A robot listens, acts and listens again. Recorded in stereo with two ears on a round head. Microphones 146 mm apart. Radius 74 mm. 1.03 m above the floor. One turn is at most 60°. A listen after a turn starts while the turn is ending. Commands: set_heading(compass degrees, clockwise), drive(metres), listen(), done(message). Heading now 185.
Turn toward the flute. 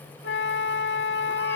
set_heading(125)
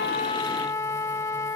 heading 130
set_heading(110)
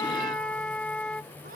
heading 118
set_heading(108)
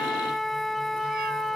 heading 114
done("Facing the flute.")